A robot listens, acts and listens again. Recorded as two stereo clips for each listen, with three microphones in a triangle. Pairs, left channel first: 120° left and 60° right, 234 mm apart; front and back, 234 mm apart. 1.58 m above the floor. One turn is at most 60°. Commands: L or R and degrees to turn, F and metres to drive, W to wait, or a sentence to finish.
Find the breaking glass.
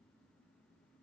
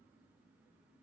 W
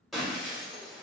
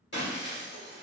L30
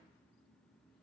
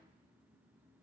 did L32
Facing where the breaking glass came from. I can't hear it now.